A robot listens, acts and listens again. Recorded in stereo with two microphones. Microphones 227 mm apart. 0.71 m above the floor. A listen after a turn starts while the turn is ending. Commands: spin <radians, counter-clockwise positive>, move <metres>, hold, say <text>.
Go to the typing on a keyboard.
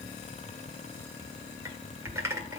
spin -0.52
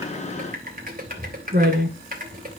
spin -2.44
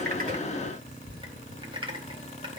spin -0.44
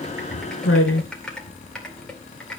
move 1.0
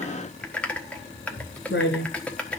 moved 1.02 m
move 1.0
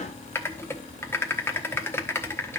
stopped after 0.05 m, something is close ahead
spin 0.26
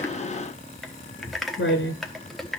say I am next to the typing on a keyboard.